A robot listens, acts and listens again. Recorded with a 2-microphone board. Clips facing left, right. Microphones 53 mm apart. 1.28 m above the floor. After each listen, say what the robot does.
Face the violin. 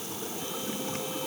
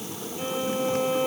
Turn 50° right.
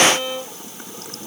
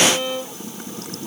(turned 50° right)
Facing the violin.